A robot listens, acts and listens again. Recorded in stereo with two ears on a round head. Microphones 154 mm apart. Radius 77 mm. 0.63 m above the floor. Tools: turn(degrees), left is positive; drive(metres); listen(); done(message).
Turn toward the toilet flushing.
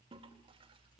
turn(degrees=-30)
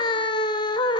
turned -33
listen()
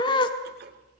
turn(degrees=-115)
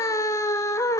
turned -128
turn(degrees=15)
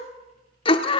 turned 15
listen()
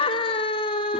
done("I heard a toilet flushing from this way, but can't make it out now.")